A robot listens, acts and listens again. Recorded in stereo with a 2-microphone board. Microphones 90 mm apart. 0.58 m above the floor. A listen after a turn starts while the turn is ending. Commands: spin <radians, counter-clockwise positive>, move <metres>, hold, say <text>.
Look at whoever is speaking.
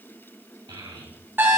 spin -1.05
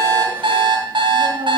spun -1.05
spin -1.13
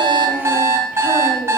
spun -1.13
hold
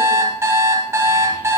hold
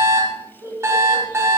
spin -0.61
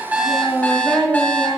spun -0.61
spin 0.26
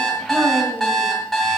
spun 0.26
hold
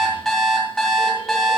hold
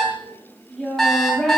say Facing the child speaking, 2 to 4 m away.